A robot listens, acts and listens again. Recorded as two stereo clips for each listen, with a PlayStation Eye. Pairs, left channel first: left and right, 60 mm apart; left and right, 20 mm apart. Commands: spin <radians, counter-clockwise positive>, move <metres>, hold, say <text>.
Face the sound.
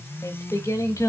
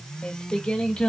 spin 1.05
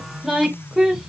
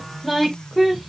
spin -0.17
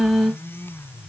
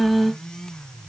say Found it: singing, straight ahead, 1 to 2 m away.